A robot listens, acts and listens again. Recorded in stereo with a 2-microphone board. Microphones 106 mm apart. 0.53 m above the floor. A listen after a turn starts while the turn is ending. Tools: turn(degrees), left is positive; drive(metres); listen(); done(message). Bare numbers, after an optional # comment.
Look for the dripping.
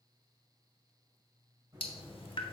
# The dripping: about 60° left or 120° left.
turn(60)
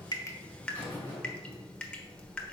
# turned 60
listen()
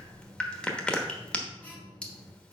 # So it is at 10° left.
turn(10)
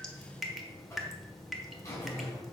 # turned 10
done("Found it: dripping, straight ahead, 1 to 2 m away.")